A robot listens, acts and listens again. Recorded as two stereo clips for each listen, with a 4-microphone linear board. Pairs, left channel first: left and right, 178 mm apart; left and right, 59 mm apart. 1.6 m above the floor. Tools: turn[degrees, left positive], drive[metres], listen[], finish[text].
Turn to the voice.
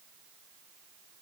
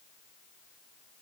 Action: listen[]
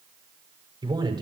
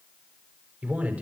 Thought: The man speaking: about 25° right or 155° right.
Action: turn[-25]
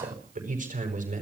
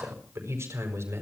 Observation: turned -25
Thought: So it is at 135° right.
Action: turn[-135]
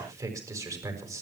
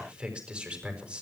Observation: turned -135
Thought: The man speaking is now 20° right.
Action: turn[-20]
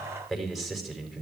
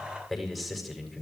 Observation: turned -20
Action: finish[Facing the man speaking, over 4 m away.]